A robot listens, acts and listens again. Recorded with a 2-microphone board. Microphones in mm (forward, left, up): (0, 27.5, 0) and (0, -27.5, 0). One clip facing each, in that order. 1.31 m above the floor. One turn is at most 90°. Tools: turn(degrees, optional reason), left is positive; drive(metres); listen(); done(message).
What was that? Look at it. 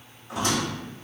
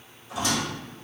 turn(degrees=50, reason="The squeak: about 50° left or 130° left.")
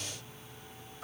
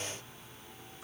listen()
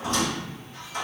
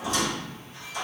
turn(degrees=65, reason="So it is at 65° left.")
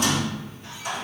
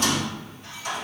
turn(degrees=10, reason="The squeak is now 10° left.")
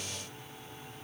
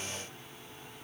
listen()
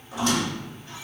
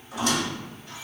done("Facing the squeak, 1 to 2 m away.")